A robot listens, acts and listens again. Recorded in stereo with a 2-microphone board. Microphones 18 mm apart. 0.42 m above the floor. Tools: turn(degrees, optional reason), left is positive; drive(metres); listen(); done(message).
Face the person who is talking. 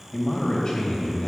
turn(degrees=40, reason="The man speaking: about 40° left or 140° left.")
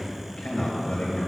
turn(degrees=90, reason="So it is at 90° left.")
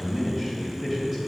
done("Found it: a man speaking, straight ahead.")